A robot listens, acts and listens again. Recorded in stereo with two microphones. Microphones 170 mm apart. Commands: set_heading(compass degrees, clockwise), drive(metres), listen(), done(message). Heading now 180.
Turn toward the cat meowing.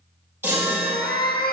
set_heading(115)
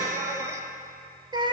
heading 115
set_heading(145)
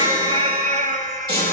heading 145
set_heading(205)
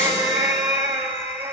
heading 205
set_heading(220)
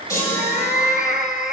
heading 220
done("Found it: a cat meowing, straight ahead, 1 to 2 m away.")